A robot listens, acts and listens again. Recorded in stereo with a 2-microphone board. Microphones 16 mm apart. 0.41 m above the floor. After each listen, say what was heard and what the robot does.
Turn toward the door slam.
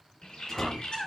The door slam: about 25° left or 155° left. Turn 25° left.
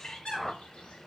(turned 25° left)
Keep listening.
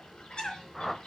I heard a door slam, but can't make it out now. It was about straight ahead or 130° left.